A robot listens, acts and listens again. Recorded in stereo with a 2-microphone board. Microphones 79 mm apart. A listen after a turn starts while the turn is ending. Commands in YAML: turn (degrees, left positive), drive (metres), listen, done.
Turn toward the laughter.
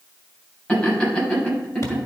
turn: 30
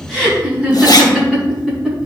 done: "Found it: laughter, straight ahead, over 4 m away."